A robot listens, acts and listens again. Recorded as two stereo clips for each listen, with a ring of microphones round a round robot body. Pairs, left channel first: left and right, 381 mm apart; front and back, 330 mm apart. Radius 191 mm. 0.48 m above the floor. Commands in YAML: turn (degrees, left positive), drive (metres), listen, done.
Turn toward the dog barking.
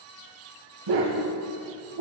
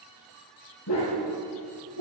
turn: -55
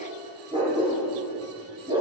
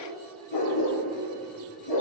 turn: -15
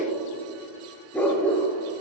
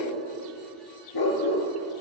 done: "Facing the dog barking, 2 to 4 m away."